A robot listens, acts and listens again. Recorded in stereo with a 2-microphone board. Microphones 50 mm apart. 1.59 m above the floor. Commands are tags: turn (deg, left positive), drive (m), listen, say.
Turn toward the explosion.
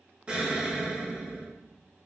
<turn deg="-20"/>
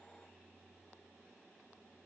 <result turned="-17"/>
<listen/>
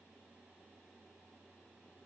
<say>I heard an explosion, but can't make it out now. It was about straight ahead or 145° right.</say>